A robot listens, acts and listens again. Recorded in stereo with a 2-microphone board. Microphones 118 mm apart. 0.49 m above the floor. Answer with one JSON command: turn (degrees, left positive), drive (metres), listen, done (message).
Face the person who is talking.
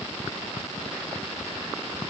{"listen": true}
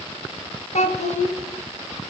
{"turn": 90}
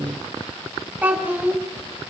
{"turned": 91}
{"turn": -15}
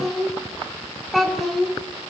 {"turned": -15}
{"done": "Found it: a child speaking, straight ahead."}